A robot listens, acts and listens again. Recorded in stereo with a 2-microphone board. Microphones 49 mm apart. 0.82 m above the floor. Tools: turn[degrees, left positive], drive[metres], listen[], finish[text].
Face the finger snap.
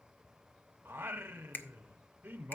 Thought: The finger snap: about 45° left or 135° left.
Action: turn[45]
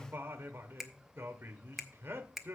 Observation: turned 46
Action: finish[Facing the finger snap, under 1 m away.]